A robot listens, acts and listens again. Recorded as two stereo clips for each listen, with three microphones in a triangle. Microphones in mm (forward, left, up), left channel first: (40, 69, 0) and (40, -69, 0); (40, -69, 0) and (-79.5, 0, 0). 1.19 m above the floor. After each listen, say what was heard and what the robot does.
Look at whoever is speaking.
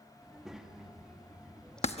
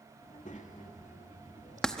Found it: a child speaking, straight ahead, 1 to 2 m away.